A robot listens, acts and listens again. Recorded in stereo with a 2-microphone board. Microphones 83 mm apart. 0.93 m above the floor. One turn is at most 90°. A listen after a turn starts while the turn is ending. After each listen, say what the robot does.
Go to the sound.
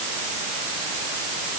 Keep listening.
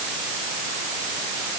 Keep listening.
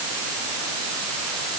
I can't make out anything.